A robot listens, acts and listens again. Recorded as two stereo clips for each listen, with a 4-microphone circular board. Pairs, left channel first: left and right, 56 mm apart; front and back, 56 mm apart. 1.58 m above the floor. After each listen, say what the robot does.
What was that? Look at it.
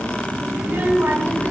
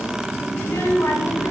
Turn 35° right.
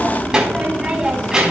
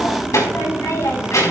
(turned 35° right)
Turn 10° right.
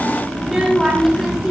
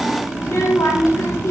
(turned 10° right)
Facing the child speaking.